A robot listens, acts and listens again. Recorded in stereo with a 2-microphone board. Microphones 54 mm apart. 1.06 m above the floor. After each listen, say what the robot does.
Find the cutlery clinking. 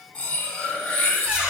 Turn 30° left.
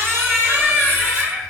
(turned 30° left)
Keep listening.
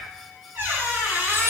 Keep listening.
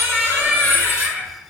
Turn 115° left.
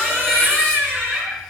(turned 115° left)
Keep listening.
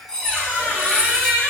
Turn 20° left.
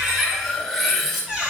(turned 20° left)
Facing the cutlery clinking.